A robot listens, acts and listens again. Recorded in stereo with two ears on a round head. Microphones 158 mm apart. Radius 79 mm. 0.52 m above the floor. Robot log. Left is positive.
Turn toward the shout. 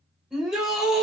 cmd yaw -30
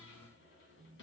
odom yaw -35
cmd idle
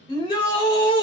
note: So it is at 30° left.
cmd yaw +30
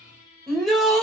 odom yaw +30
end: Facing the shout, 1 to 2 m away.